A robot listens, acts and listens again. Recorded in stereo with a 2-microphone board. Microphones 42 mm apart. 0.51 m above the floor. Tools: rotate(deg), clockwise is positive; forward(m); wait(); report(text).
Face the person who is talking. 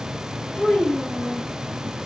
rotate(-45)
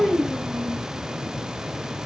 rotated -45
rotate(-10)
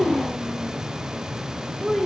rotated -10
report("Found it: a child speaking, straight ahead, 1 to 2 m away.")